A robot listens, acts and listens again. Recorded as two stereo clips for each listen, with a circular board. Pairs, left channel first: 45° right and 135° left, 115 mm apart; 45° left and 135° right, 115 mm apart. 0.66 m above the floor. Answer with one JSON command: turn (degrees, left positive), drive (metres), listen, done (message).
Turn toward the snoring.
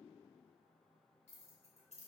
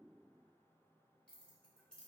{"listen": true}
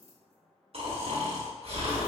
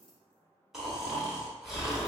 {"turn": 140}
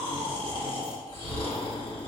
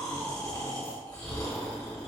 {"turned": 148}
{"done": "Found it: snoring, straight ahead."}